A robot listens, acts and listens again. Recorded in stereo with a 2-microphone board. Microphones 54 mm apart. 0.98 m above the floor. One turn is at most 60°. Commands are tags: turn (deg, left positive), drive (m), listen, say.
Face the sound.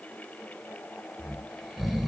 <turn deg="30"/>
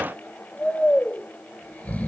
<turn deg="60"/>
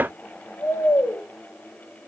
<turn deg="60"/>
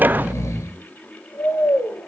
<turn deg="60"/>
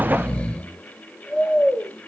<turn deg="20"/>
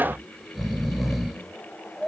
<say>Found it: snoring, straight ahead.</say>